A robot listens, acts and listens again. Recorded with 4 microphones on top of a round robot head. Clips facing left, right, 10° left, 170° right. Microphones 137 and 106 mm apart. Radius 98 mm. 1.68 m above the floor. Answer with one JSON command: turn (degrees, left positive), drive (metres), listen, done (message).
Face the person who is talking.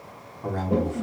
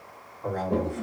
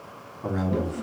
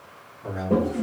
{"turn": 25}
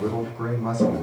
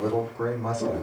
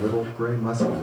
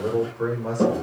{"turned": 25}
{"turn": -15}
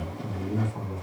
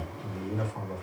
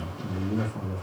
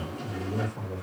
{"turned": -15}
{"done": "Facing the man speaking, 2 to 4 m away."}